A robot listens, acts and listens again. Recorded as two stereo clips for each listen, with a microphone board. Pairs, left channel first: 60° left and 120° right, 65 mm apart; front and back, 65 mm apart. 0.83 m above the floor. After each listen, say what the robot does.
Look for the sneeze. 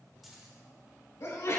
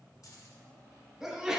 Turn 95° left.
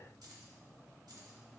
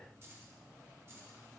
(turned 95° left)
Facing where the sneeze came from. I can't hear it now.